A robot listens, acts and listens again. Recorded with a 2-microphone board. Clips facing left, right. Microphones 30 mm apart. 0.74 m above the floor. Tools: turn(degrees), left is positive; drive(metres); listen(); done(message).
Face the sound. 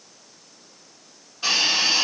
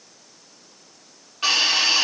turn(degrees=-60)
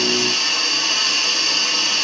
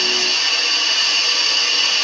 turn(degrees=-50)
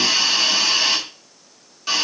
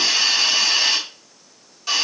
turn(degrees=10)
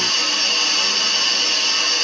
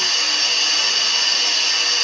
done("Facing the hiss, 1 to 2 m away.")